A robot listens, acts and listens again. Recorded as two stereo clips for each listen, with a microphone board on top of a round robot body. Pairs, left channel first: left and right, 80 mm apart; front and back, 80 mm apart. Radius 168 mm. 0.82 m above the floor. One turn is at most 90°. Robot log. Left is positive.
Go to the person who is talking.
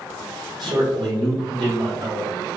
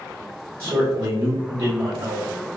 note: The man speaking: 120° right.
cmd yaw -90
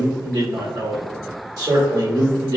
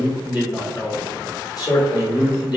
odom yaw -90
note: The man speaking is now 45° right.
cmd yaw -45
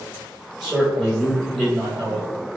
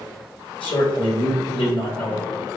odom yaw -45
note: The man speaking is now 10° right.
cmd yaw -10
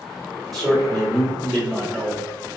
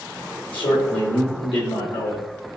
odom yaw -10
cmd fwd 1.0
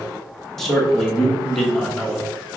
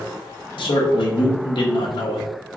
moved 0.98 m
cmd fwd 1.0
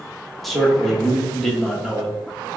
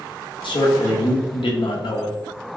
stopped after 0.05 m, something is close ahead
end: Arrived at the man speaking, straight ahead.